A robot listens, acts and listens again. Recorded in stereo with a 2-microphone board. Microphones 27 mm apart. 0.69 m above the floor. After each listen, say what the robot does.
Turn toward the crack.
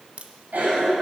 Turn 50° right.
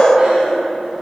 Keep listening.
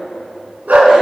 I heard a crack, but can't make it out now. It was about straight ahead or 80° right.